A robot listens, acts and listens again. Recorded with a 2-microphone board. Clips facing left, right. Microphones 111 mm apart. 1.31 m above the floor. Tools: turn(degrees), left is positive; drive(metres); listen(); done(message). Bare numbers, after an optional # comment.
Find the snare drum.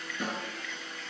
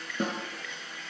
# The snare drum: about 40° right or 140° right.
turn(-40)
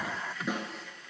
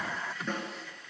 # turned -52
# So it is at 10° left.
turn(10)
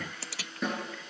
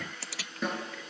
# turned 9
done("Facing the snare drum, over 4 m away.")